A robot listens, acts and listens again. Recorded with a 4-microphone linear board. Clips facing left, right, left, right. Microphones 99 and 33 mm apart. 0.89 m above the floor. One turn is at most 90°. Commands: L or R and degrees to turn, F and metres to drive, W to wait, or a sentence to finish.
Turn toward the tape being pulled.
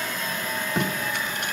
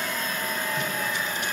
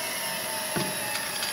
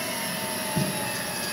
L60
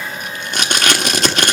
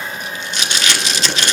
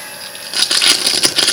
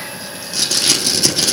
L55
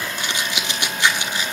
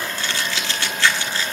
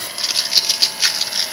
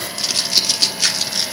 L15
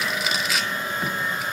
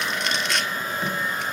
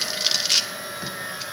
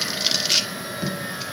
Facing the tape being pulled, 1 to 2 m away.